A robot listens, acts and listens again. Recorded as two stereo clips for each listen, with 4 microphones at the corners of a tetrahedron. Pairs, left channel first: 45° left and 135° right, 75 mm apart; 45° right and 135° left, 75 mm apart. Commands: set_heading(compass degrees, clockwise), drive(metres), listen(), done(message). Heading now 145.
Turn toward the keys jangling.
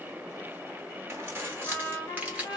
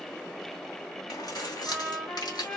set_heading(210)
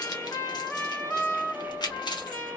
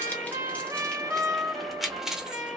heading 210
set_heading(150)
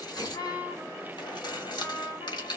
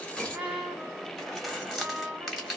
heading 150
set_heading(105)
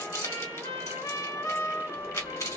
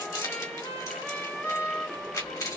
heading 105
done("Found it: keys jangling, straight ahead.")